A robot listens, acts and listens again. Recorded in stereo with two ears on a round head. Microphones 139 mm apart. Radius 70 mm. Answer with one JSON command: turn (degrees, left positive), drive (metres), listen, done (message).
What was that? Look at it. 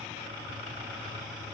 {"listen": true}
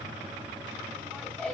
{"turn": 30}
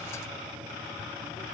{"listen": true}
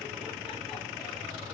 {"listen": true}
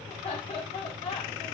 {"turn": 145}
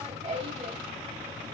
{"turn": -45}
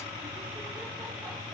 {"listen": true}
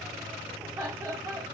{"turn": -20}
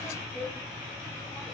{"done": "Found it: laughter, straight ahead, 2 to 4 m away."}